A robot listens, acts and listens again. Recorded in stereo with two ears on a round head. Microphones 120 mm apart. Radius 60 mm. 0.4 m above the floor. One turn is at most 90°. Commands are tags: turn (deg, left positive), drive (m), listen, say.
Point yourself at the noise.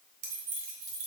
<turn deg="-70"/>
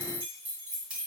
<turn deg="-10"/>
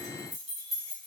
<say>Facing the keys jangling, 2 to 4 m away.</say>